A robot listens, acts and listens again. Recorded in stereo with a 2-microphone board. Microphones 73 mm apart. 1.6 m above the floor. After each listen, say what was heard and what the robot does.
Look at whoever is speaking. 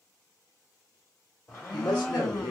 The woman speaking: about 75° left or 105° left. Turn 75° left.
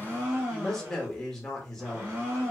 So it is at 10° left. Turn 10° left.
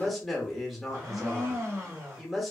Found it: a woman speaking, straight ahead.